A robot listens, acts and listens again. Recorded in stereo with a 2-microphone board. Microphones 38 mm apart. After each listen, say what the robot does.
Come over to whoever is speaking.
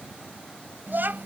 Turn 65° right.
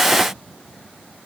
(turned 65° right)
Keep listening.
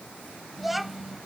Drive 1.0 m forward.
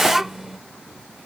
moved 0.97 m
Turn 10° right.
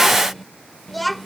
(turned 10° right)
Drive 1.0 m forward.
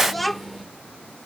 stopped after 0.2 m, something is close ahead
I am next to the child speaking.